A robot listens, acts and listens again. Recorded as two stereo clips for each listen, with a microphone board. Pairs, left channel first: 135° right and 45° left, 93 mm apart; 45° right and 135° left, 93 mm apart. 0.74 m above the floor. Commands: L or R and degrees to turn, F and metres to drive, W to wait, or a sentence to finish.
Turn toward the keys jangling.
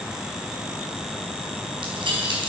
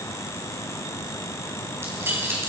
L70
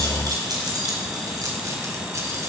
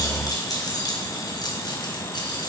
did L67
Facing the keys jangling, 2 to 4 m away.